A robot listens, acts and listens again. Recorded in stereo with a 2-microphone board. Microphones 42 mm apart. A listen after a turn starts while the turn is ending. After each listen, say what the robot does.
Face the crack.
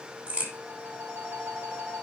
Turn 35° right.
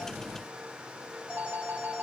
Keep listening.
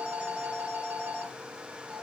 I heard a crack, but can't make it out now. It was about straight ahead or 110° right.